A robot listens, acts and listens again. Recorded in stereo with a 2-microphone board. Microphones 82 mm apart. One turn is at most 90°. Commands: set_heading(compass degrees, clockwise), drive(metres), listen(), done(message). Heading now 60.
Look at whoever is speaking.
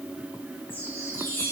listen()
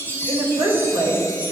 set_heading(150)
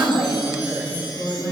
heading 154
set_heading(169)
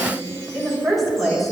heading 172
done("Facing the woman speaking.")